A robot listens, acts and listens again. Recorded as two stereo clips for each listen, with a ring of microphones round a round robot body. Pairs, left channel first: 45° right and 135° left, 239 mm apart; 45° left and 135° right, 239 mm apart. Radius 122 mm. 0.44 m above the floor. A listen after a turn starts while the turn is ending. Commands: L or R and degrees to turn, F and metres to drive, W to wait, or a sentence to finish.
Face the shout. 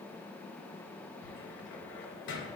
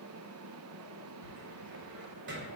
W
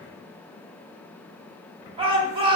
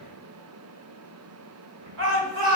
R160
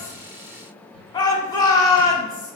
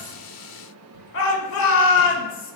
L25
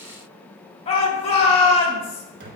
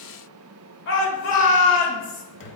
L15
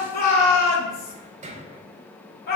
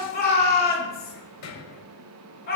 Found it: a shout, straight ahead, 1 to 2 m away.